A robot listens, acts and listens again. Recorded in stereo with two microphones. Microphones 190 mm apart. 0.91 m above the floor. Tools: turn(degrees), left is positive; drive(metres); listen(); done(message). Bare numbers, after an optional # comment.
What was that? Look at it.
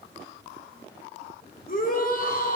# The shout: about 50° left or 130° left.
turn(50)
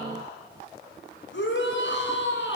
# So it is at 80° left.
turn(80)
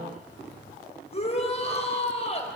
# The shout is now 35° left.
turn(35)
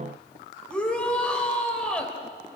done("Found it: a shout, straight ahead.")